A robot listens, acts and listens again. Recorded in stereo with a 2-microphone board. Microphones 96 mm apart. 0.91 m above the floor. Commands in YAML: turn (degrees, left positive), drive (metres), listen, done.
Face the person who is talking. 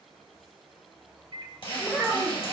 turn: 20
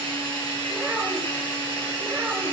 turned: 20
listen: true
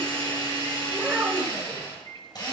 done: "Found it: a child speaking, straight ahead, 2 to 4 m away."